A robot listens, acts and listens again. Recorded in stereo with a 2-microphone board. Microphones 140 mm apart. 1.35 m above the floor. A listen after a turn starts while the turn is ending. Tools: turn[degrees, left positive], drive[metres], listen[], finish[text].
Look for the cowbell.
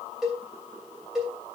Action: turn[30]
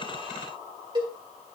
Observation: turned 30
Thought: So it is at 30° right.
Action: turn[-30]
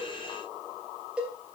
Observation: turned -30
Action: finish[Found it: a cowbell, straight ahead, 2 to 4 m away.]